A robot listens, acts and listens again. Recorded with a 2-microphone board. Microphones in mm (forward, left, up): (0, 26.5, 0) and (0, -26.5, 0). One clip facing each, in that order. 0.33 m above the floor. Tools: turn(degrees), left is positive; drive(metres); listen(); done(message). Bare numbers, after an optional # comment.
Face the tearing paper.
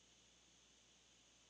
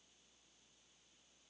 listen()
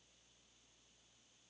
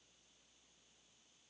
listen()
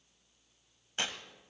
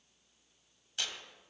# The tearing paper: about 30° left or 150° left.
turn(30)
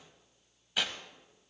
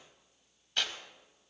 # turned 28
# So it is at 10° left.
turn(10)
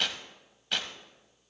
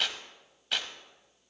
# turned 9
done("Facing the tearing paper.")